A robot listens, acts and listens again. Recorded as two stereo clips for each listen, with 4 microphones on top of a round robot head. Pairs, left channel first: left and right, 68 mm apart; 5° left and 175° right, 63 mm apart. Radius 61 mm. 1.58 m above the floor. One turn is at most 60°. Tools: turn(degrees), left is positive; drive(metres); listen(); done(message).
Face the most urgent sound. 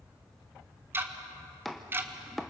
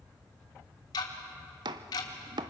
listen()
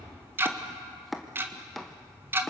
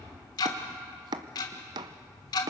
listen()
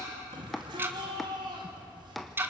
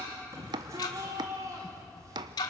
turn(degrees=-60)
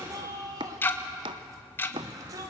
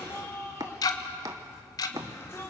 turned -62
turn(degrees=-55)
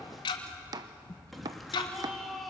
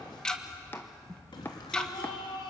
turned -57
done("Found it: a shout, straight ahead.")